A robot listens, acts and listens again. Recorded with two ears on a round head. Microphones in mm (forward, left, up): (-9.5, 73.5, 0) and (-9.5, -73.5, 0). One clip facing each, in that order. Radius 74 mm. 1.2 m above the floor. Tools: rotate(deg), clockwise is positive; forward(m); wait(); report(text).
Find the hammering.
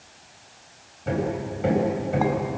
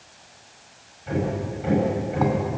rotate(-60)
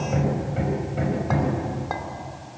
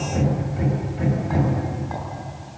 rotate(-60)
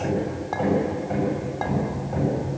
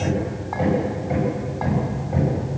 rotate(10)
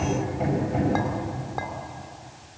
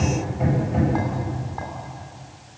report("Found it: hammering, straight ahead, over 4 m away.")